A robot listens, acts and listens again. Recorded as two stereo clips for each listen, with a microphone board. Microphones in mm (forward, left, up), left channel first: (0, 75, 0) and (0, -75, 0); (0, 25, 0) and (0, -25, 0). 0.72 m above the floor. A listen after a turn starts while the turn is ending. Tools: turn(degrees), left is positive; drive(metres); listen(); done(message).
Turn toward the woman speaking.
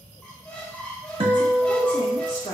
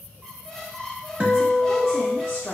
turn(degrees=55)
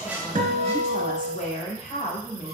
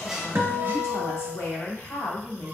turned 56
turn(degrees=60)
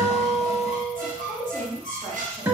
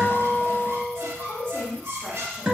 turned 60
turn(degrees=10)
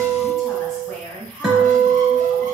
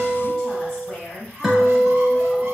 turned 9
done("Found it: a woman speaking, straight ahead, 2 to 4 m away.")